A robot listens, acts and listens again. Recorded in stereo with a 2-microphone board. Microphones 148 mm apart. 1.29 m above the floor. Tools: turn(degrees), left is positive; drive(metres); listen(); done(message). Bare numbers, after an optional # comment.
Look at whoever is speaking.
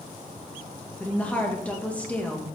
turn(30)
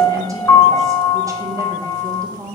# So it is at 20° right.
turn(-20)
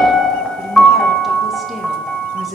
done("Found it: a woman speaking, straight ahead.")